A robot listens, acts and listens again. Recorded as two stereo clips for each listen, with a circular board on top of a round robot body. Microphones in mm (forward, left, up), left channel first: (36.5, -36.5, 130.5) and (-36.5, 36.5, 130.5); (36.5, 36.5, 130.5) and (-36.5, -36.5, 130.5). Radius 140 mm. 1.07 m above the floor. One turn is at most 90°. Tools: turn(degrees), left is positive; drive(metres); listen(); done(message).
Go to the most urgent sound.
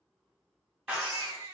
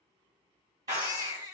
turn(degrees=90)
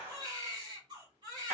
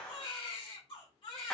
turn(degrees=85)
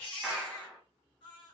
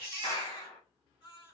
drive(metres=1.0)
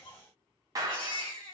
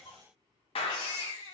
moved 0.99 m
drive(metres=1.0)
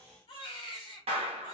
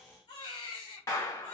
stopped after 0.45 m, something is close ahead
done("Arrived at the baby crying, straight ahead.")